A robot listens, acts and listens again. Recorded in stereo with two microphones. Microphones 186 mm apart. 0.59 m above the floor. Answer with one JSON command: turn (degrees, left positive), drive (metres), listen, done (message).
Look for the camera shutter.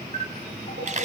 {"turn": -40}
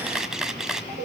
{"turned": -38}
{"done": "Facing the camera shutter."}